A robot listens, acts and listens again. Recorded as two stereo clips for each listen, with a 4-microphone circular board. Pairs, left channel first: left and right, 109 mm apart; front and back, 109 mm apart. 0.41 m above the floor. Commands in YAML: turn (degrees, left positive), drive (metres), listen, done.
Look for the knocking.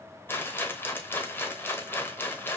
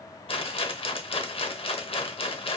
listen: true
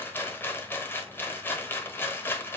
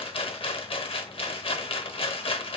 listen: true
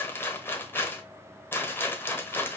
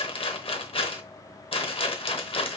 done: "I can't make out knocking to turn to."